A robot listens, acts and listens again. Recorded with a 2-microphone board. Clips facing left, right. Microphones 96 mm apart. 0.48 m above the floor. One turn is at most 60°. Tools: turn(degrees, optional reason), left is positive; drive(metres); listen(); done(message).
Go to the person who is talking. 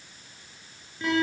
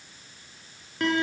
listen()
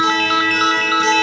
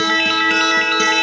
listen()
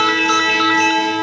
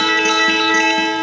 done("I can't make out anyone speaking, only a ringtone and a guitar.")